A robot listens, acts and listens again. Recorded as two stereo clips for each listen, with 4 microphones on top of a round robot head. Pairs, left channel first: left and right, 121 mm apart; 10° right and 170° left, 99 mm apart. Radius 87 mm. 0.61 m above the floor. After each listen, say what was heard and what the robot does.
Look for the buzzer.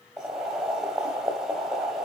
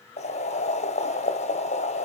Keep listening.
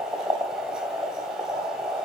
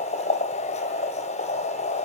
Keep listening.
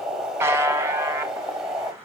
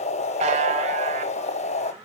The buzzer: 160° right. Turn 160° right.
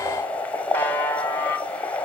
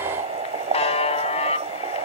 The buzzer is now 10° left. Turn 10° left.
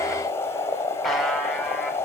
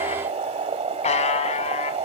Found it: a buzzer, straight ahead.